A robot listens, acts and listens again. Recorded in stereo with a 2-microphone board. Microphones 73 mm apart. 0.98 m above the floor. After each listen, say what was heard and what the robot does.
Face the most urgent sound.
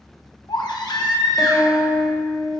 The baby crying: about 70° left or 110° left. Turn 70° left.
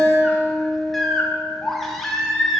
Found it: a baby crying, straight ahead, under 1 m away.